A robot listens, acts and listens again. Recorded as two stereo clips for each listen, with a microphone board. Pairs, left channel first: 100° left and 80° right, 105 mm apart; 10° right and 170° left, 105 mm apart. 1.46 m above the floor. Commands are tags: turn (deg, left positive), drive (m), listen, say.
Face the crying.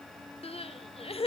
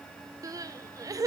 <turn deg="120"/>
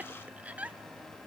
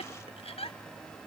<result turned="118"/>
<say>Found it: crying, straight ahead, under 1 m away.</say>